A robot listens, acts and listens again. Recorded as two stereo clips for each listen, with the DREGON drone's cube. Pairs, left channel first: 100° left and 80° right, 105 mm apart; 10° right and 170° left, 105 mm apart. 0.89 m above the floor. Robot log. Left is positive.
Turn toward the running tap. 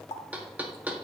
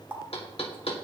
note: The running tap: 95° left.
cmd yaw +95
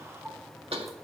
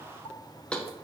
cmd idle
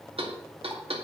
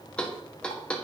cmd idle
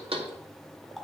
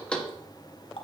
note: The running tap is now 10° left.
cmd yaw +10
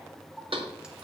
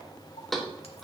cmd idle
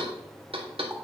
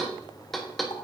cmd idle
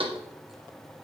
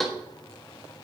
end: I heard a running tap from this way, but can't make it out now.